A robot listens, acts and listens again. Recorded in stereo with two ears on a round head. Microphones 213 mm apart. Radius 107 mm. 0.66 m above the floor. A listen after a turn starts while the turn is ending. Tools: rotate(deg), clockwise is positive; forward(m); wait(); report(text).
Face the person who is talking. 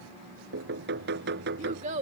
rotate(30)
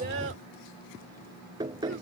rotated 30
wait()
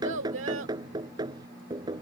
rotate(120)
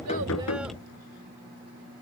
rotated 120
wait()
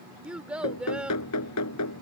report("Facing the child speaking.")